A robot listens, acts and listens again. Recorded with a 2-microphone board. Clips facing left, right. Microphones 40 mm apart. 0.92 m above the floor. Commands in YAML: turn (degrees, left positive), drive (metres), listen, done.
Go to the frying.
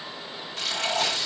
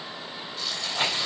turn: 90
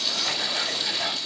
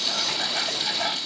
drive: 1.0
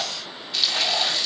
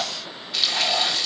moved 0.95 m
drive: 1.0
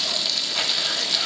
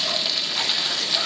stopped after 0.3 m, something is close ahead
turn: -10
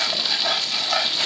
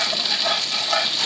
done: "Arrived at the frying, straight ahead."